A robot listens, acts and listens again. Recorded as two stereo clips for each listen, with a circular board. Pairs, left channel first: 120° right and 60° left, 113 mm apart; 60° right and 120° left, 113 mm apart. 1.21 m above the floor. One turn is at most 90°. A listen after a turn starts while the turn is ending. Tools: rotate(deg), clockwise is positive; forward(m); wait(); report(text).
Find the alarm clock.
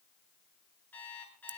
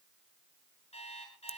rotate(45)
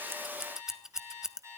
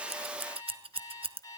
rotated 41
report("Facing the alarm clock.")